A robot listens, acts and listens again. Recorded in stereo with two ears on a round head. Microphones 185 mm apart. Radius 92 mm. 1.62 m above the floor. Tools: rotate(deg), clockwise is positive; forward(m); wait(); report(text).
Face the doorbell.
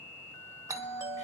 rotate(15)
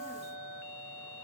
rotate(150)
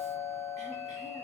rotate(-15)
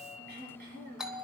report("Facing the doorbell.")